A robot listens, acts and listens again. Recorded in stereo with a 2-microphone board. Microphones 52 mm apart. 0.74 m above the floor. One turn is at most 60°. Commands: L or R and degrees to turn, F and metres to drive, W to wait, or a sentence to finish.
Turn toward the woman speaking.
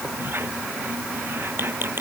W
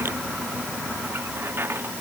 W
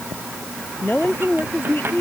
L40
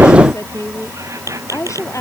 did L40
L60
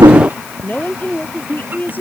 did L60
L40
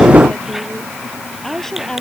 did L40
L10
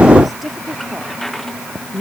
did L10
Found it: a woman speaking, straight ahead.